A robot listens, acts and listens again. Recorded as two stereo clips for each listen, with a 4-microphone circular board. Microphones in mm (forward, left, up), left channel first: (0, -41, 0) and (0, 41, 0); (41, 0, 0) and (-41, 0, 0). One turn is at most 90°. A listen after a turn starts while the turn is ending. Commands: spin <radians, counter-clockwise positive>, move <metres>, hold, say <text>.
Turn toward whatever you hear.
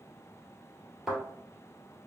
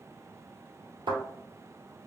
spin 1.57
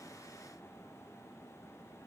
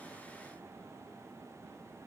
spin 1.40
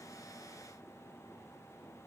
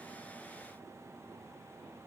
say I heard a thud from this way, but can't make it out now.